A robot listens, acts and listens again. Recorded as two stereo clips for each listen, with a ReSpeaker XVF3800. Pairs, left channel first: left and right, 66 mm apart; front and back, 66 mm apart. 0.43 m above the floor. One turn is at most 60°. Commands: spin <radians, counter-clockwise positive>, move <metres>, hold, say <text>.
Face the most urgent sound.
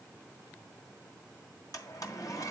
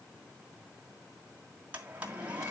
hold
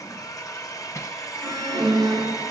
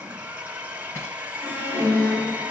spin -0.96
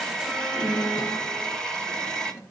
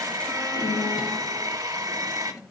say Facing the alarm, over 4 m away.